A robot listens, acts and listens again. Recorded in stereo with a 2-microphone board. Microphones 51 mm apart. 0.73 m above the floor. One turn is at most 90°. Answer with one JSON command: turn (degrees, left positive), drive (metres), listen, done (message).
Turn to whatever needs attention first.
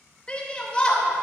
{"turn": 20}
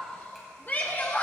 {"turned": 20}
{"turn": 90}
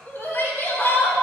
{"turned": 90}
{"turn": 50}
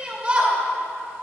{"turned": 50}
{"turn": -25}
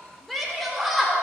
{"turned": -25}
{"done": "Found it: a shout, straight ahead, 2 to 4 m away."}